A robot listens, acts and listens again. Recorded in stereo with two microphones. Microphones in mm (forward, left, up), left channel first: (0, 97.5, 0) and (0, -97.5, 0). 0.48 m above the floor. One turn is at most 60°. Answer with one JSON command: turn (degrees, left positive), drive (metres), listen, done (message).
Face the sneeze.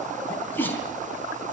{"turn": 30}
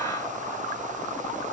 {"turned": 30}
{"listen": true}
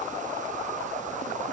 {"done": "I heard a sneeze, but can't make it out now. It was about 20° right or 140° left."}